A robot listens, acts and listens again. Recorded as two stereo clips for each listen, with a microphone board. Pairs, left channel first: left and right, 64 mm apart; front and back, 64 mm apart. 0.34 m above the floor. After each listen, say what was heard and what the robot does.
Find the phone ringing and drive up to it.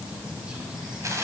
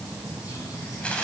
Keep listening.
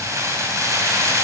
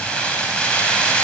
Keep listening.
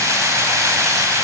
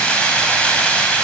I can't make out a phone ringing to turn to.